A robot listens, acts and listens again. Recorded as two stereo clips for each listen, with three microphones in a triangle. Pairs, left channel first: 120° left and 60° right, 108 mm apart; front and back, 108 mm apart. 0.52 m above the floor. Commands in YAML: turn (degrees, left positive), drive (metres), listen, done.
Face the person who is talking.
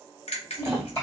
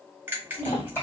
turn: 65
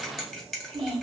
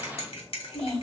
turn: -15
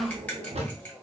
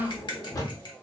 done: "Found it: a child speaking, straight ahead, 2 to 4 m away."